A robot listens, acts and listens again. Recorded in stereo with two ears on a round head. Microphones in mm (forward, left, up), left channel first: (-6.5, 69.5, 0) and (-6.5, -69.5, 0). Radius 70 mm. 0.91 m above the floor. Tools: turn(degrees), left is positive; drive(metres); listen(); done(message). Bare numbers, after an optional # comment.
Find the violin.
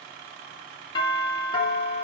listen()
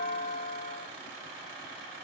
listen()
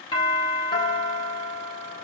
done("I can't make out a violin, only a doorbell.")